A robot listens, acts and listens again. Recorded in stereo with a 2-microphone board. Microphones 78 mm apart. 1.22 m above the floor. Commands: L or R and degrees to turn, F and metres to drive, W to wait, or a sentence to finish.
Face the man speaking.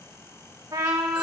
W
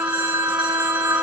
W
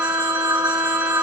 I can't make out a man speaking, only a trumpet and a phone ringing.